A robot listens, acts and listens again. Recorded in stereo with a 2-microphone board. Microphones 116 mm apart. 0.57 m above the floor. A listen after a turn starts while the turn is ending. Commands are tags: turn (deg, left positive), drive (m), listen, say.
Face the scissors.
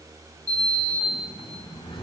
<listen/>
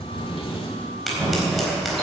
<turn deg="30"/>
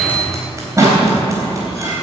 <turn deg="-30"/>
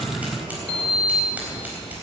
<listen/>
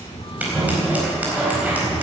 <turn deg="-15"/>
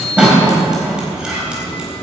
<turn deg="-10"/>
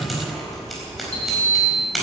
<say>Found it: scissors, straight ahead.</say>